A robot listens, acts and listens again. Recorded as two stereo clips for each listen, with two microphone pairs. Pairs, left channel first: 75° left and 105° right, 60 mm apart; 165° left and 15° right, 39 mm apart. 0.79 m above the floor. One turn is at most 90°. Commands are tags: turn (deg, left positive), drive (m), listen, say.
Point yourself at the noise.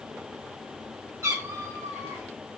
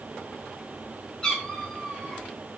<turn deg="-90"/>
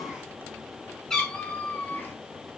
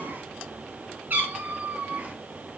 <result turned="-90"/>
<turn deg="25"/>
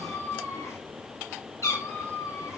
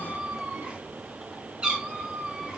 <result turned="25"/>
<turn deg="50"/>
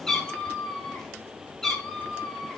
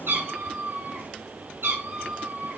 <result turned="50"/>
<say>Facing the cat meowing.</say>